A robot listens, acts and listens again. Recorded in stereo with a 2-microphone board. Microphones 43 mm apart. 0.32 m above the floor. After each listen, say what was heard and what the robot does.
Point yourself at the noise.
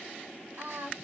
The singing: about 50° right or 130° right. Turn 50° right.
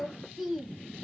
Facing the singing, under 1 m away.